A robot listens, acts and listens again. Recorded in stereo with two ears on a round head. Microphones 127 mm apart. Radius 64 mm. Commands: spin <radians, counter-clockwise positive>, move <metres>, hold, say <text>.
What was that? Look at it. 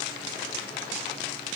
hold
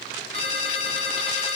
spin 0.79
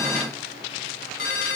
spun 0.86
spin 1.48
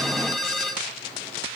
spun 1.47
say Found it: a ringtone, straight ahead, 2 to 4 m away.